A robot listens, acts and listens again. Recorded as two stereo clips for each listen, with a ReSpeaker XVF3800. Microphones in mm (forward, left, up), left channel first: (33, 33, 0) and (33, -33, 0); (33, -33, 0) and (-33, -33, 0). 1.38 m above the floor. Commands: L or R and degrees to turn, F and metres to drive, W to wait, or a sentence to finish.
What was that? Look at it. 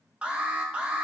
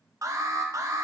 R160
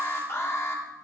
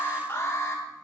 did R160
L45
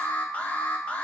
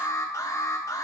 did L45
L25
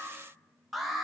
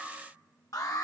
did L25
Facing the alarm.